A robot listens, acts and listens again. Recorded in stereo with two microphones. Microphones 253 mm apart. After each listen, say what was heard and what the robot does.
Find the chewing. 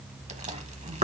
The chewing: about 30° right or 150° right. Turn 30° right.
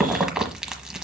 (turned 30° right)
Found it: chewing, straight ahead, 1 to 2 m away.